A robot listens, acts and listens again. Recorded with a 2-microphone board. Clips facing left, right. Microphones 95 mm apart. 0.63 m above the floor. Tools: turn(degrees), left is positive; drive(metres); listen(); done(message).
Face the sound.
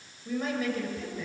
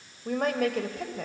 turn(degrees=-70)
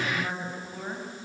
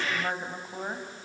turn(degrees=-25)
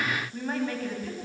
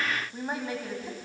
turn(degrees=-15)
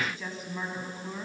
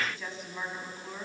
done("Found it: a woman speaking, straight ahead, over 4 m away.")